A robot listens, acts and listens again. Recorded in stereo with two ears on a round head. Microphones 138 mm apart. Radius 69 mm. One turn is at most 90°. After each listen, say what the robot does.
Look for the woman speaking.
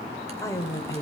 Turn 20° left.
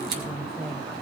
Turn 30° left.
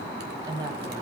Turn 25° right.
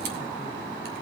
Keep listening.
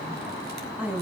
Turn 10° right.
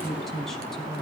Found it: a woman speaking, straight ahead.